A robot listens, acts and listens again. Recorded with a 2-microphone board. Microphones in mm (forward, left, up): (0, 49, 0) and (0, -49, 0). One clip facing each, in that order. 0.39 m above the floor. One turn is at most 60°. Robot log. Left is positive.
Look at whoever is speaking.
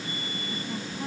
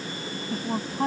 note: The woman speaking: about 65° right or 115° right.
cmd yaw -60
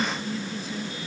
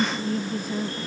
note: So it is at 50° right.
cmd yaw -50
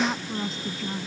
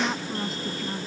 end: Found it: a woman speaking, straight ahead.